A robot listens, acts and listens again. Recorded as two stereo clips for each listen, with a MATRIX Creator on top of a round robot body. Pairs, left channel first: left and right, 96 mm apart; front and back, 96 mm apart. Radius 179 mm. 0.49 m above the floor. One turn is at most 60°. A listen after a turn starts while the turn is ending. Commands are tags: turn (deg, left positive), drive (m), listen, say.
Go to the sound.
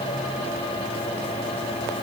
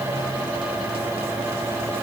<listen/>
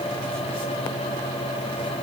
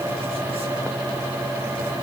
<listen/>
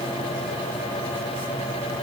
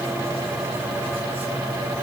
<say>I can't make out anything.</say>